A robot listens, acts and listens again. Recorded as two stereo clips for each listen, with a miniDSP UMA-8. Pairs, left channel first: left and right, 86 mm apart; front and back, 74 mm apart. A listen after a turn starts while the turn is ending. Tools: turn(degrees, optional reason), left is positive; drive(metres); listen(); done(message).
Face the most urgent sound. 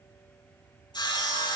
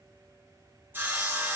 listen()
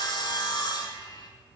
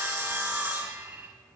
listen()
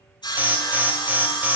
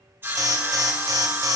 turn(degrees=-155, reason="The alarm: 155° right.")
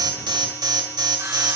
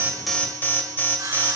turn(degrees=-60, reason="The alarm is now 60° right.")
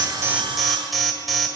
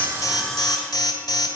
done("Facing the alarm.")